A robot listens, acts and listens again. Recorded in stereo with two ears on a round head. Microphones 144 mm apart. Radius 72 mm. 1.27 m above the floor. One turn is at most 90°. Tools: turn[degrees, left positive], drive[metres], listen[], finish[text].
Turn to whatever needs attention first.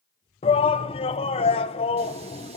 Thought: The shout: about 35° left or 145° left.
Action: turn[35]
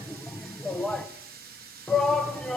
Action: finish[Found it: a shout, straight ahead, under 1 m away.]